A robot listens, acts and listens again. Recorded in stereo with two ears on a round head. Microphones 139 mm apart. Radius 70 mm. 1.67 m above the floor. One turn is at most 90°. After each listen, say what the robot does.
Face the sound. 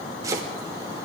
Turn 25° right.
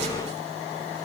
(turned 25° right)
Keep listening.
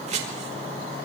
Turn 90° right.
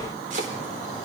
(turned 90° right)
Turn 50° right.
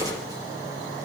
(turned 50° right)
Keep listening.
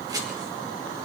Turn 25° right.
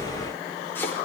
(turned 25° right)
Turn 15° left.
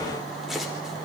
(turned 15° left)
Found it: chopping, straight ahead.